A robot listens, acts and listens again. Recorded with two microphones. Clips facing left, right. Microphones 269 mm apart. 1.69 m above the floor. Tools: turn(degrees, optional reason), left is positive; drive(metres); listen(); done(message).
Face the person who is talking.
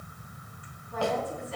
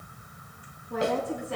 turn(degrees=-75, reason="The woman speaking: about 75° right or 105° right.")
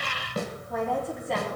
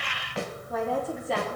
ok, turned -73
done("Facing the woman speaking.")